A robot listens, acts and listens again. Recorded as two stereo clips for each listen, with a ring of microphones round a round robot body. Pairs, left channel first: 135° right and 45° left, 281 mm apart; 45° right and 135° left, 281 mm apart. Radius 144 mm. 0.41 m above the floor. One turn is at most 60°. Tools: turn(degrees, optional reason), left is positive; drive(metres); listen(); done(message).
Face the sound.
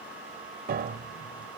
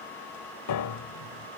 turn(degrees=-15, reason="The piano: 15° right.")
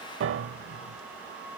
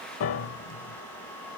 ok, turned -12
done("Found it: a piano, straight ahead.")